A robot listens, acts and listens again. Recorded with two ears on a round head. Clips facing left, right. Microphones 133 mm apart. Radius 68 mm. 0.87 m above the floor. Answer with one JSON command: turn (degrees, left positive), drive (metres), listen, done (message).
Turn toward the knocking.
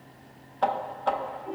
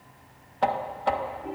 {"turn": -30}
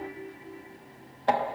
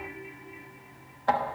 {"turn": 30}
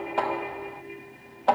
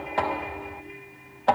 {"done": "Found it: knocking, straight ahead, 1 to 2 m away."}